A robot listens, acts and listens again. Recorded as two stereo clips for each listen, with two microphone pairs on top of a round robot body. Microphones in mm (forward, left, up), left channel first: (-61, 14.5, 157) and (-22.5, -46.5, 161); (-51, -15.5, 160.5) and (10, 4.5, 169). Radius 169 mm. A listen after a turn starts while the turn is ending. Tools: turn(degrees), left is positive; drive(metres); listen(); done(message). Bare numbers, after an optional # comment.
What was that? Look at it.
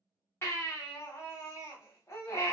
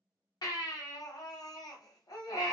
# The baby crying: straight behind.
turn(180)
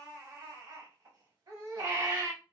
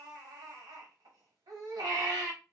# The baby crying is now 10° right.
turn(-10)
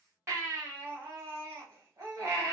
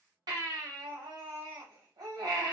done("Found it: a baby crying, straight ahead, 1 to 2 m away.")